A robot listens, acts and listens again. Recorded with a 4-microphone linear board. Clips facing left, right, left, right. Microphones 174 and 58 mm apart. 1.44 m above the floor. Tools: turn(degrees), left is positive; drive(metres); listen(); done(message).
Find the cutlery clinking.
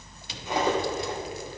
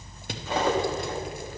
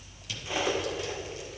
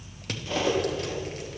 turn(degrees=15)
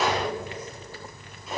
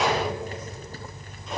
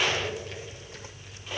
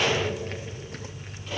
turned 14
done("Found it: cutlery clinking, straight ahead.")